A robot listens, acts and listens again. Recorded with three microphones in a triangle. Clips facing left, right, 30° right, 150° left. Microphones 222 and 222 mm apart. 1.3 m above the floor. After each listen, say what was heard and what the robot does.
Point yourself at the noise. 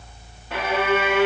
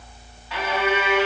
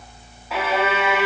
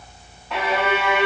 The violin: 55° left. Turn 55° left.
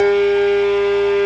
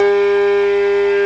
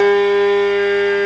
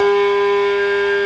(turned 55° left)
Found it: a violin, straight ahead.